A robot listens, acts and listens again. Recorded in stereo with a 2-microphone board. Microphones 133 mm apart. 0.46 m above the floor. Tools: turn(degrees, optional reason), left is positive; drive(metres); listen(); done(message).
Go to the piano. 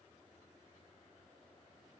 listen()
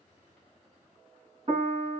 turn(degrees=-45, reason="The piano: about 45° right or 135° right.")
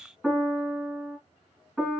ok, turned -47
drive(metres=1.0)
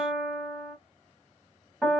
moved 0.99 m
drive(metres=1.0)
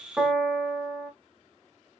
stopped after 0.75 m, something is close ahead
turn(degrees=-10, reason="The piano is now 10° right.")
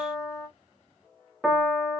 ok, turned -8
done("Arrived at the piano, straight ahead.")